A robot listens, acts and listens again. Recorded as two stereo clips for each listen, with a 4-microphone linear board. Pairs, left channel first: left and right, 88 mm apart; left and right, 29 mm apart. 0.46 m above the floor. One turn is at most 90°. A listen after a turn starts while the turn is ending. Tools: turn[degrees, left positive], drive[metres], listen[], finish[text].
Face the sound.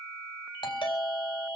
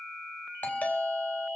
Thought: The doorbell: about 70° left or 110° left.
Action: turn[70]
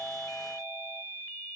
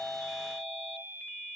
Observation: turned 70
Action: listen[]
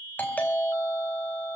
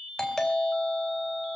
Thought: So it is at 20° left.
Action: turn[20]
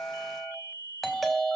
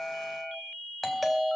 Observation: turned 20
Action: finish[Facing the doorbell, 2 to 4 m away.]